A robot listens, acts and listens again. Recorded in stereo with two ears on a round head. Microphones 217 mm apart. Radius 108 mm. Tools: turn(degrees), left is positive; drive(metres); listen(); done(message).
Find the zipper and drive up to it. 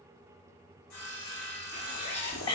turn(degrees=30)
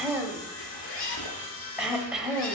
turn(degrees=125)
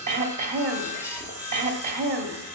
turn(degrees=-10)
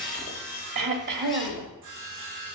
listen()
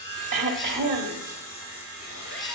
drive(metres=1.0)
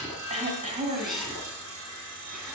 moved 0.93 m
drive(metres=1.0)
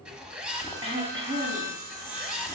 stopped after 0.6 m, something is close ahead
done("Arrived at the zipper, straight ahead.")